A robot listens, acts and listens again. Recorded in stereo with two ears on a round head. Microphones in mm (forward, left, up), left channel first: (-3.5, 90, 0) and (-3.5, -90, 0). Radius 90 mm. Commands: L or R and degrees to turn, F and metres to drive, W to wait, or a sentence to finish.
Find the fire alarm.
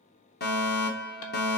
L50
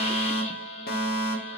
L60
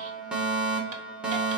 Found it: a fire alarm, straight ahead, 1 to 2 m away.